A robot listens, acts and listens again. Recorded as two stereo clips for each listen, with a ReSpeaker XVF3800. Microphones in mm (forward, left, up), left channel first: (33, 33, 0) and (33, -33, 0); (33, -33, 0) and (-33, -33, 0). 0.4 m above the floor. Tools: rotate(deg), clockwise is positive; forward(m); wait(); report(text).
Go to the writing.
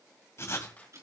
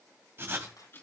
rotate(-130)
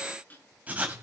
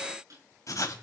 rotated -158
rotate(25)
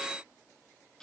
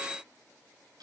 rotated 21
wait()
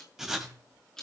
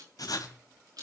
rotate(10)
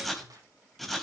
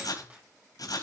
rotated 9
forward(1.0)
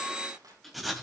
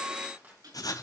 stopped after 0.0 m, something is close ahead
report("Something is in my way. I am facing the writing but have not reached it.")